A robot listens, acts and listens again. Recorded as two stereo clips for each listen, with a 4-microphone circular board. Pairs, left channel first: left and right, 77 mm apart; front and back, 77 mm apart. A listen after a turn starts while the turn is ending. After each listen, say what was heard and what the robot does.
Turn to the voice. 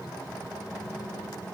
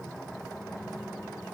Keep listening.
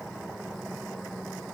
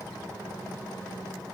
Keep listening.
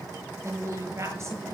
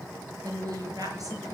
The woman speaking: 145° right. Turn 145° right.
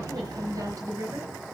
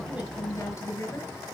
The woman speaking is now 50° right. Turn 50° right.
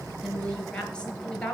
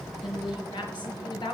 The woman speaking is now 10° left. Turn 10° left.
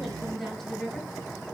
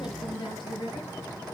Facing the woman speaking, over 4 m away.